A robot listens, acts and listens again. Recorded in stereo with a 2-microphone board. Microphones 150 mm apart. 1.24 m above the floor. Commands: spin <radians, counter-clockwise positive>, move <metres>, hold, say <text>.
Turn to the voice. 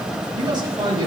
spin -0.52
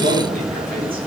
spin -1.92
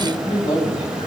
spin 0.61
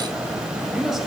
say Facing the man speaking.